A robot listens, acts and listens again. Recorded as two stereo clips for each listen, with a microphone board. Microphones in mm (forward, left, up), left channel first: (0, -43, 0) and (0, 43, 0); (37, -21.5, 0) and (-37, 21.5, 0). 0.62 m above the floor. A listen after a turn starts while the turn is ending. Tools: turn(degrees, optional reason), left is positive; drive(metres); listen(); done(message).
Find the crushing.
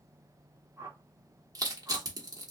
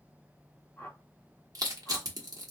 turn(degrees=120, reason="The crushing: 120° left.")
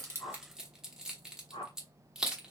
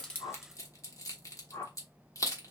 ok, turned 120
turn(degrees=10, reason="The crushing is now 10° left.")
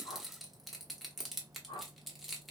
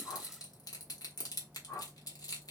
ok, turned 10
done("Facing the crushing.")